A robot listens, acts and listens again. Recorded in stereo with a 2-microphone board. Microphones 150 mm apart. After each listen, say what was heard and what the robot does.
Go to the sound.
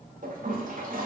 The toilet flushing: about 65° right or 115° right. Turn 65° right.
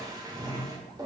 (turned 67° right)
So it is at 30° right. Turn 30° right.
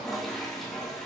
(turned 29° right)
Drive 1.0 m forward.
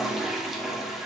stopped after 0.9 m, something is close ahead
I am next to the toilet flushing.